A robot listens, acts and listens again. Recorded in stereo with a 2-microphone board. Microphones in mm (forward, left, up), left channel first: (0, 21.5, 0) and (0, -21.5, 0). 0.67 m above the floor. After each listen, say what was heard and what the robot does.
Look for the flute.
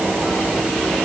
Keep listening.
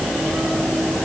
Keep listening.
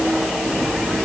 I can't make out a flute to turn to.